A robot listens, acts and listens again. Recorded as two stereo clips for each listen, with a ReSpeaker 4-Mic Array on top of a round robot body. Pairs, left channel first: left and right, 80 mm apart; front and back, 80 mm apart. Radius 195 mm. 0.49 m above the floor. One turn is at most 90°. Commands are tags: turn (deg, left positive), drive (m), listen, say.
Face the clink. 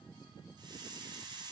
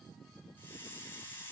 <listen/>
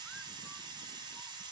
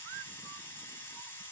<listen/>
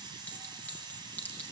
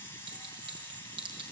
<turn deg="90"/>
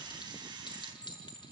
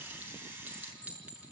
<turn deg="90"/>
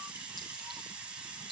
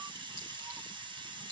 <turn deg="15"/>
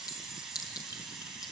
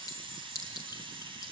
<turn deg="50"/>
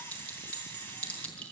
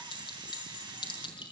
<turn deg="15"/>
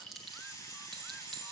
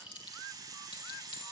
<say>Facing the clink, over 4 m away.</say>